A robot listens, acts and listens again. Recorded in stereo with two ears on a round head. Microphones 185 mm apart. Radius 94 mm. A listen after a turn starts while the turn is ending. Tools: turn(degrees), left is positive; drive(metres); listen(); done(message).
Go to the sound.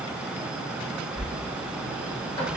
turn(degrees=15)
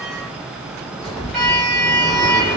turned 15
drive(metres=1.0)
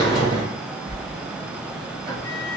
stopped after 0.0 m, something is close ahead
done("Blocked. The sliding door is further on, straight ahead.")